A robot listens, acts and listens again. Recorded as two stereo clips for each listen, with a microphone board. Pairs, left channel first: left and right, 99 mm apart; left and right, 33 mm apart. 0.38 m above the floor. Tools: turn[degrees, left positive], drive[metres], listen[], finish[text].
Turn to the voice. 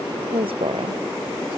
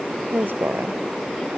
Thought: The woman speaking: about 70° right or 110° right.
Action: turn[-70]
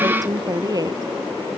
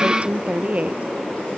Thought: So it is at 40° right.
Action: turn[-40]
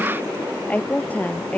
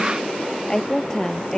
Thought: The woman speaking is now 15° left.
Action: turn[15]
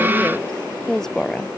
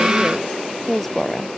Action: finish[Found it: a woman speaking, straight ahead.]